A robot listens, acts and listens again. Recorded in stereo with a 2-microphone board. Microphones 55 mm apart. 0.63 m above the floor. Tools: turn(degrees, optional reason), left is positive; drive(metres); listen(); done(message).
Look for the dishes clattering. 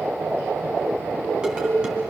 turn(degrees=-30)
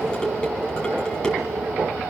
turn(degrees=15, reason="So it is at 15° left.")
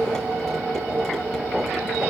listen()
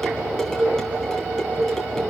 done("Facing the dishes clattering.")